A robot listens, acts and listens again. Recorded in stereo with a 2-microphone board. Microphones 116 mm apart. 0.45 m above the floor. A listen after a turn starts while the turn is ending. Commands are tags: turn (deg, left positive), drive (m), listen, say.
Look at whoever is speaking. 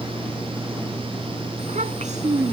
<turn deg="-75"/>
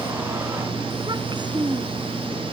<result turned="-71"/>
<turn deg="-40"/>
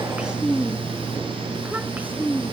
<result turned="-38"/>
<turn deg="-15"/>
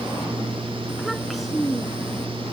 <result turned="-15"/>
<say>Facing the child speaking.</say>